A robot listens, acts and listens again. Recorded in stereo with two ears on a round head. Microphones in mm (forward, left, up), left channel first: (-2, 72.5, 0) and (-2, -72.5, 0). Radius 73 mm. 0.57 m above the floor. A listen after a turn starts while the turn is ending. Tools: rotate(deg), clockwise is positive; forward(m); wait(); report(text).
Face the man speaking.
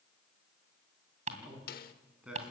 rotate(30)
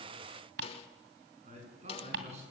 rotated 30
rotate(135)
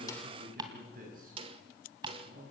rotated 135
rotate(55)
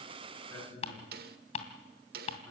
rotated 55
rotate(-10)
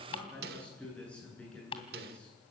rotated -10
report("Facing the man speaking.")